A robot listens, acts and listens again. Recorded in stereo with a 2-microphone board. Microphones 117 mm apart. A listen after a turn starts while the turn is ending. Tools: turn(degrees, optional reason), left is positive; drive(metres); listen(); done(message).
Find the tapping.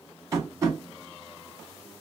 turn(degrees=-25, reason="The tapping: about 25° right or 155° right.")
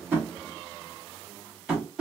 turn(degrees=-10, reason="So it is at 10° right.")
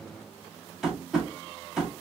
done("Found it: tapping, straight ahead.")